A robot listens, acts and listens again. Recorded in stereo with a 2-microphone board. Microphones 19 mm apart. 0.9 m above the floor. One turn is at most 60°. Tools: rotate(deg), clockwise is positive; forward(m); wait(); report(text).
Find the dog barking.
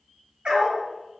rotate(60)
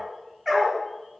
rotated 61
rotate(10)
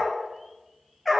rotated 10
report("Found it: a dog barking, straight ahead.")